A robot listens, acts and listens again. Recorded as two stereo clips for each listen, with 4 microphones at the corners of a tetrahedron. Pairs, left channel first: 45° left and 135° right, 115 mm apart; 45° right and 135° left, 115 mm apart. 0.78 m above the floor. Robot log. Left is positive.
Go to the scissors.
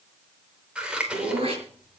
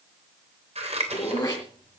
note: The scissors: 145° left.
cmd yaw +145
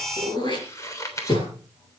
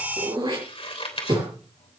note: The scissors is now 15° right.
cmd yaw -15
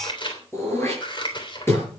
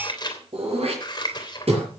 cmd fwd 1.0
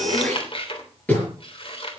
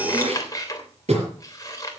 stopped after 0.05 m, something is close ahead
note: The scissors is now 10° left.
cmd yaw +10
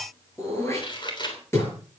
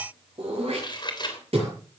end: Something is in my way. I am facing the scissors but have not reached it.